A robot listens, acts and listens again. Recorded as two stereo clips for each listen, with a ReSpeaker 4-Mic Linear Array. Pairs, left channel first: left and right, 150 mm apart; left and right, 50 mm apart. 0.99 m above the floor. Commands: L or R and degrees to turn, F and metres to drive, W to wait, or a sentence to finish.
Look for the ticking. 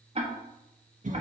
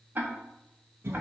R40
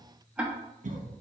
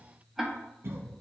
R10
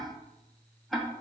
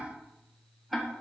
Found it: ticking, straight ahead.